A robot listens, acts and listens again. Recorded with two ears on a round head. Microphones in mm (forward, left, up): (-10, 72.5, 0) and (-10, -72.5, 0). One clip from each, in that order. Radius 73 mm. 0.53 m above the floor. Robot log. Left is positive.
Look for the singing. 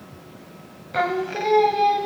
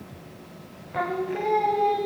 note: The singing: about 55° left or 125° left.
cmd yaw +55
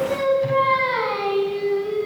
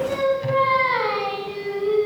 note: So it is at 25° right.
cmd yaw -25
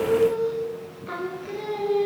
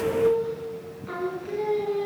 note: The singing is now 10° left.
cmd yaw +10
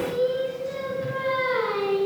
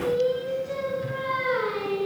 end: Found it: singing, straight ahead, 2 to 4 m away.